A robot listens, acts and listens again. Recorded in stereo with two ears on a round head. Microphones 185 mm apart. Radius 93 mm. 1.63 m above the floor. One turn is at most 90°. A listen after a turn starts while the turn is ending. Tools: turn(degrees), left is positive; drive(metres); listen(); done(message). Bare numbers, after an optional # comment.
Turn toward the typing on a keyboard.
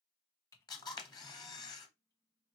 # The typing on a keyboard: about 15° left or 165° left.
turn(15)
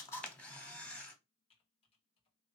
# So it is at 150° left.
turn(90)
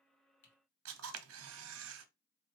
# Nothing new. It was at 60° left.
turn(60)
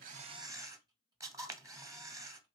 listen()
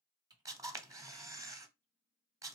# The typing on a keyboard is now 20° right.
turn(-20)
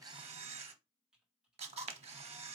done("Facing the typing on a keyboard.")